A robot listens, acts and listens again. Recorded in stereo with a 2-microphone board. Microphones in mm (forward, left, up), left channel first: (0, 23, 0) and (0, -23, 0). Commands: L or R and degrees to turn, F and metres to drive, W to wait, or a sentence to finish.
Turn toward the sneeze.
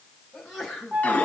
L30
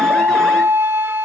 W
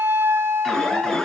I heard a sneeze, but can't make it out now. It was about 30° right or 150° left.